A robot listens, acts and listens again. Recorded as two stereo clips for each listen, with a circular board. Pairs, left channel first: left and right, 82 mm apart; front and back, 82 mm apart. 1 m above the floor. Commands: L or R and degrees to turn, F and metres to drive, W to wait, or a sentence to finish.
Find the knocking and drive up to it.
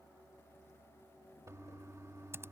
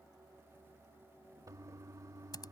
W
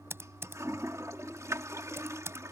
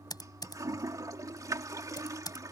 W
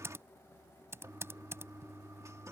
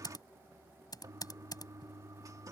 I can't make out knocking to turn to.